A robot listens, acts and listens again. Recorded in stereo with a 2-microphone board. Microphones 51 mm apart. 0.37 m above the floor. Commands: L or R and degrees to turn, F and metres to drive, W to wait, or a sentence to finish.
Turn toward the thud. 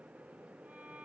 W
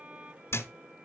L60
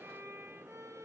W
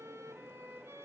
I heard a thud, but can't make it out now. It was about straight ahead or 60° left.